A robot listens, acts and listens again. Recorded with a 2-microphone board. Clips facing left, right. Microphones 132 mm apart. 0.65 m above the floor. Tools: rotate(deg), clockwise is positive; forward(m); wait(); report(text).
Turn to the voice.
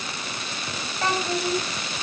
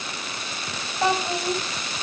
rotate(20)
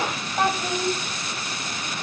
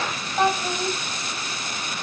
report("Facing the child speaking.")